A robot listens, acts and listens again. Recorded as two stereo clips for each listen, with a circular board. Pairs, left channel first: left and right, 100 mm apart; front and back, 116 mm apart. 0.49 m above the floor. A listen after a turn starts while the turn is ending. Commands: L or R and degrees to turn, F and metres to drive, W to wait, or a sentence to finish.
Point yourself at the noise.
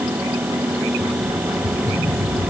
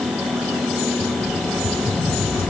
L15
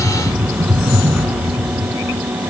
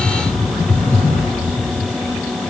Facing the rattle.